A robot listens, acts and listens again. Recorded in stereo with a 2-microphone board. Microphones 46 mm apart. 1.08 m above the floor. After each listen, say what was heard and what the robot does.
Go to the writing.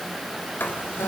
The writing: about 50° left or 130° left. Turn 50° left.
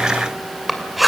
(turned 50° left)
Drive 1.0 m forward.
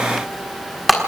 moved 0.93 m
Drive 1.0 m forward.
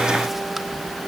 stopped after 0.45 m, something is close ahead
Keep listening.
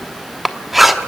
I am next to the writing.